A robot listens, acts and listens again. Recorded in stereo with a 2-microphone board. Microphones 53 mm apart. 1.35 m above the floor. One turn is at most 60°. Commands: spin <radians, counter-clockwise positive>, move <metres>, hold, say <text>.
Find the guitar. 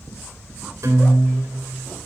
spin -1.05
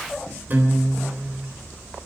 spin -0.61
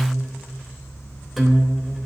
say Facing the guitar, 2 to 4 m away.